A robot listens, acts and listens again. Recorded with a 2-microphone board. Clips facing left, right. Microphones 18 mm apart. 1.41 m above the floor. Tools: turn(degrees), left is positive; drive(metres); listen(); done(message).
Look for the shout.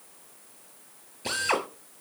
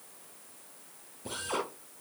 listen()
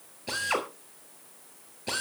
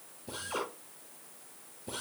listen()
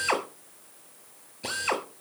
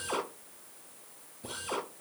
done("I can't make out a shout to turn to.")